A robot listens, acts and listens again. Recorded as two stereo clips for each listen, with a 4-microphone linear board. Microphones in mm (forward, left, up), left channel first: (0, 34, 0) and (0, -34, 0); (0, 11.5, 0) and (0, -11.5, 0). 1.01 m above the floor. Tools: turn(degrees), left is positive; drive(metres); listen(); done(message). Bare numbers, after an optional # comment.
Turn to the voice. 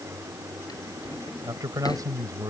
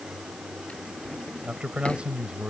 # The man speaking: about 65° right or 115° right.
turn(-65)
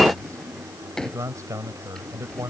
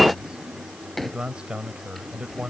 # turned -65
# So it is at 50° right.
turn(-50)
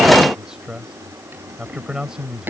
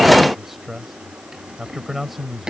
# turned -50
# The man speaking is now 10° right.
turn(-10)
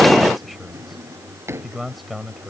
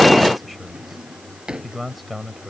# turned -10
done("Found it: a man speaking, straight ahead.")